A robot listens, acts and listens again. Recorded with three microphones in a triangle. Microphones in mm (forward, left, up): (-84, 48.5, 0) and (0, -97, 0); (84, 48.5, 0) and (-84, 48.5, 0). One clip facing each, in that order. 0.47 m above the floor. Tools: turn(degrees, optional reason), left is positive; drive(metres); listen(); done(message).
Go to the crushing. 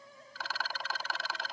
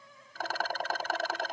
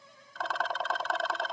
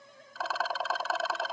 listen()
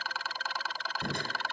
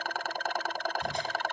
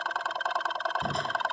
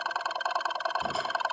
turn(degrees=95, reason="The crushing: 95° left.")
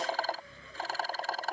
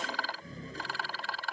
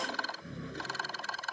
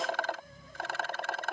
turn(degrees=-10, reason="The crushing is now 10° right.")
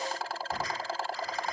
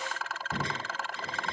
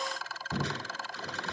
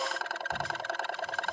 drive(metres=1.0)
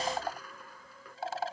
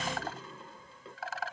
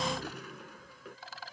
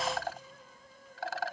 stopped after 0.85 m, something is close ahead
done("Something is in my way. I am facing the crushing but have not reached it.")